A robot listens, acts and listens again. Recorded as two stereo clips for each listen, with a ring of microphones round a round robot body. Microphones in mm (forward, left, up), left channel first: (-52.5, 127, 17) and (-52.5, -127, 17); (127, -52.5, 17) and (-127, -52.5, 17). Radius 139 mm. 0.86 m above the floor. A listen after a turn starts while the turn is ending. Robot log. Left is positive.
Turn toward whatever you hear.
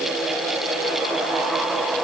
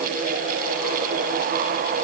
cmd idle
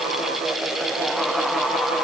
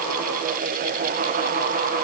cmd idle
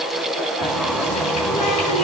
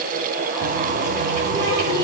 note: The running tap: 115° left.
cmd yaw +115
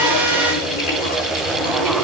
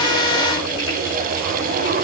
note: The running tap is now 50° left.
cmd yaw +50
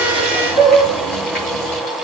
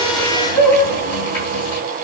end: Facing the running tap, over 4 m away.